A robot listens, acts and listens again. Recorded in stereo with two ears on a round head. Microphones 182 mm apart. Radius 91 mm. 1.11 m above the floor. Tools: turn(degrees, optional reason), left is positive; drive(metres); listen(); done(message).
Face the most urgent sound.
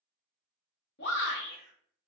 turn(degrees=55, reason="The shout: about 55° left or 125° left.")
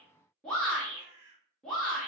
done("Found it: a shout, straight ahead.")